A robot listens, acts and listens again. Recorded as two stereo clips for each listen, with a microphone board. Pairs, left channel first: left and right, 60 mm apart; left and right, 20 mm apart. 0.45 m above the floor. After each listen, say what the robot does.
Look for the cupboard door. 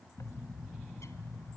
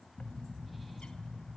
Keep listening.
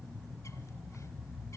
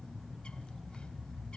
Keep listening.
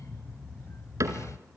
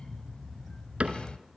Turn 60° right.
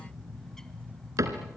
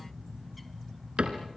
Turn 60° right.
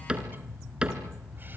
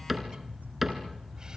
Turn 15° right.
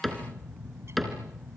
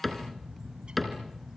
Found it: a cupboard door, straight ahead.